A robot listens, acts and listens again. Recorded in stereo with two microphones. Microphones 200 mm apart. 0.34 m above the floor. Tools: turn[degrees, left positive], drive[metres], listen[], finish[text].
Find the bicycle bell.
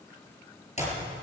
Action: listen[]
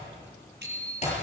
Thought: The bicycle bell: about 60° right or 120° right.
Action: turn[-60]
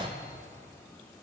Action: listen[]
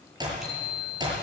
Action: finish[Found it: a bicycle bell, straight ahead.]